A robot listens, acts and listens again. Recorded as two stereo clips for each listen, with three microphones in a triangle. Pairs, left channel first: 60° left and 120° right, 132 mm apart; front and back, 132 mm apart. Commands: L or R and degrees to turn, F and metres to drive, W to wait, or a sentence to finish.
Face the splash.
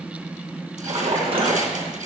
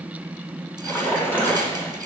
R75
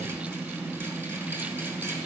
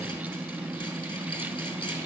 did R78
I heard a splash from this way, but can't make it out now.